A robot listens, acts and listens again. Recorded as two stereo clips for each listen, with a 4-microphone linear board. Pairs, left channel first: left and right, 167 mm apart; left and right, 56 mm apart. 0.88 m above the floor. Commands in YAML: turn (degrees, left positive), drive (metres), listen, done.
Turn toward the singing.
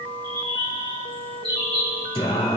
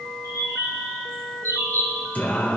turn: 35
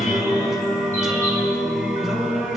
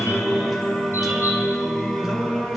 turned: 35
done: "Facing the singing."